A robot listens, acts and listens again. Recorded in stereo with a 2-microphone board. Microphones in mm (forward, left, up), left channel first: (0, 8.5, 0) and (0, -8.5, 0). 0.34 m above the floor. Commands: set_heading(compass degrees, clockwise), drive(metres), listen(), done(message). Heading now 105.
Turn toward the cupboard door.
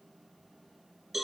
listen()
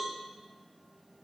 listen()
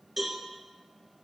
done("I can't make out a cupboard door to turn to.")